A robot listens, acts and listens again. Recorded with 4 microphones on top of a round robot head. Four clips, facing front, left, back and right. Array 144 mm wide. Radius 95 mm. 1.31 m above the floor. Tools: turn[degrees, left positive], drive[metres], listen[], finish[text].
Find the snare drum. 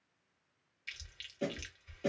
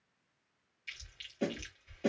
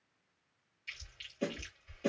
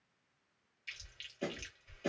Thought: The snare drum: 75° left.
Action: turn[75]
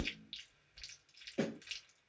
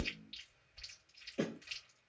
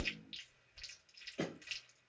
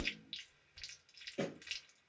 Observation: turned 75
Action: finish[Facing the snare drum.]